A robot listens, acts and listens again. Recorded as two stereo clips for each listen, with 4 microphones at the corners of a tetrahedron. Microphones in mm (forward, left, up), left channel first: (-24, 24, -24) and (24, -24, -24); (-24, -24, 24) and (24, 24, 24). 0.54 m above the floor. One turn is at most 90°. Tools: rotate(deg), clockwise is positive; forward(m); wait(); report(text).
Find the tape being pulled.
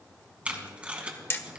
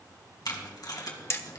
rotate(90)
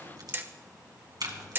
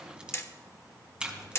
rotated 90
rotate(30)
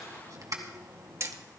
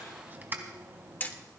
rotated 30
rotate(15)
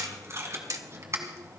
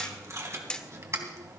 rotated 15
report("Found it: tape being pulled, straight ahead, 2 to 4 m away.")